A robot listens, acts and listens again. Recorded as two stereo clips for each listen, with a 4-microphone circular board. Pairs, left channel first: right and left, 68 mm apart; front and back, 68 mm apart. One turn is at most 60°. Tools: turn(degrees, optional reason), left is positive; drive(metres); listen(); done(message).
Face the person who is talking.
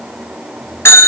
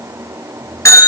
listen()
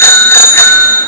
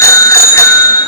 listen()
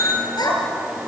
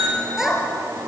turn(degrees=-60, reason="The child speaking: 100° right.")
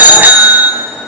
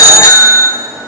turn(degrees=-40, reason="Nothing new. It was at 40° right.")
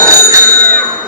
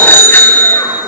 listen()
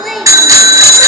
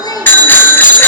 done("Facing the child speaking.")